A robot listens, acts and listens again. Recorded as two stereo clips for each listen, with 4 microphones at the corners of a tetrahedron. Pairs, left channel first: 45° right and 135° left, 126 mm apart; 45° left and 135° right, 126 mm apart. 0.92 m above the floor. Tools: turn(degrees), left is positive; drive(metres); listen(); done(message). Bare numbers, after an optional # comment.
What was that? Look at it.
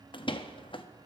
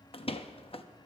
done("Facing the door slam.")